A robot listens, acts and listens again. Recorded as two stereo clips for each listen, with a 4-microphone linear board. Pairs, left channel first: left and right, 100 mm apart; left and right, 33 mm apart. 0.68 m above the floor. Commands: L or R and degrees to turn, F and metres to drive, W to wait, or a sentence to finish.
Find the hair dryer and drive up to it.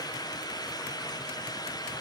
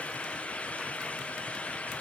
W
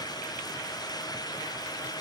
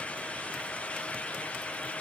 W
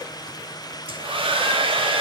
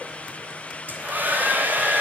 R65
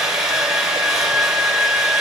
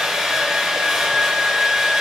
F1.0
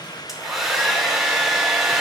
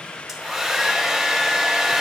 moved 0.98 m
F1.0
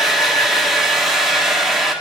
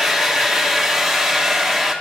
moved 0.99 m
F1.0
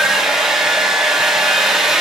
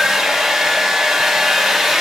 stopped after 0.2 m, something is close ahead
Arrived at the hair dryer, straight ahead.